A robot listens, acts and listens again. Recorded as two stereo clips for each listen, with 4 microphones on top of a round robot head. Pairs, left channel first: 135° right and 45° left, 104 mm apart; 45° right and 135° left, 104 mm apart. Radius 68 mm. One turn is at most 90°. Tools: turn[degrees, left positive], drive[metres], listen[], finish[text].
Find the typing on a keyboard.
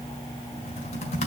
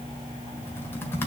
Thought: The typing on a keyboard: 110° right.
Action: turn[-90]
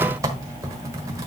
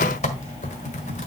Thought: The typing on a keyboard is now 20° right.
Action: turn[-20]
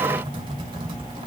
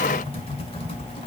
Action: finish[Facing the typing on a keyboard.]